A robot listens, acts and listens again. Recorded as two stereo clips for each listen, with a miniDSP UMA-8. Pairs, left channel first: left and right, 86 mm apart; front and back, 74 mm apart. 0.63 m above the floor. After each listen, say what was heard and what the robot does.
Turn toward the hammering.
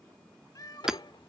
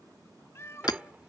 Facing the hammering.